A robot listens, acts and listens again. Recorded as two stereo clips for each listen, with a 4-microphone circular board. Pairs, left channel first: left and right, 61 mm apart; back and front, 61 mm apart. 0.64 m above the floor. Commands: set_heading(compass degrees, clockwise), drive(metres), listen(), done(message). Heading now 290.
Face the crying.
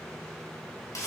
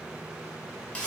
listen()
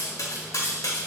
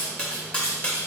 listen()
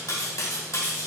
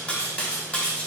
done("I can't make out crying, only cutlery clinking.")